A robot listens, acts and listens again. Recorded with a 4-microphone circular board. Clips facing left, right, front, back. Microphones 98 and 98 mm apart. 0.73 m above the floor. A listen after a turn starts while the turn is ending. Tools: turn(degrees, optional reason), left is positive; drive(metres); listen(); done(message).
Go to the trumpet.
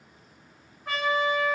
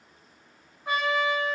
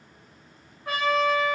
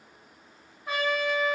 turn(degrees=-25, reason="The trumpet: 25° right.")
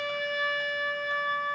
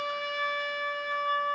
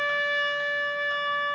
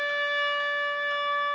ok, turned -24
drive(metres=1.0)
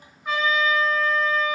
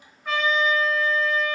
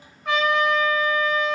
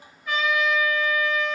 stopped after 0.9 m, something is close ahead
turn(degrees=10, reason="The trumpet is now 10° left.")
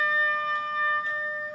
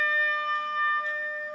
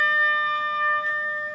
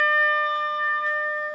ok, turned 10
done("Arrived at the trumpet, straight ahead.")